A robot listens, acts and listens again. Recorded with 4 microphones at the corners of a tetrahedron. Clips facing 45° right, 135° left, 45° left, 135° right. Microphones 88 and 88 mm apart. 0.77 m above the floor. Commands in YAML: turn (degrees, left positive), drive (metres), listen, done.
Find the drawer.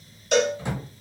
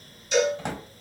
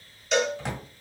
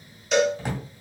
turn: 140
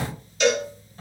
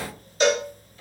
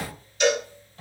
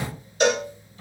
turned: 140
turn: 10
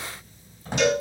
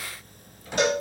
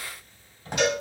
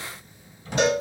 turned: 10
done: "Facing the drawer."